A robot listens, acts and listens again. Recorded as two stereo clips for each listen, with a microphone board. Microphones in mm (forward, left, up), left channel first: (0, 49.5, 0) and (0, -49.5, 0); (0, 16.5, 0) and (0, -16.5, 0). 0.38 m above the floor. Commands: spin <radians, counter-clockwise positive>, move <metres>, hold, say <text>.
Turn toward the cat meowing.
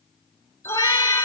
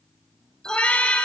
spin 0.87
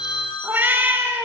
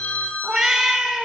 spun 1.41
spin -0.44
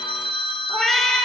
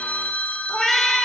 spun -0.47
say Found it: a cat meowing, straight ahead.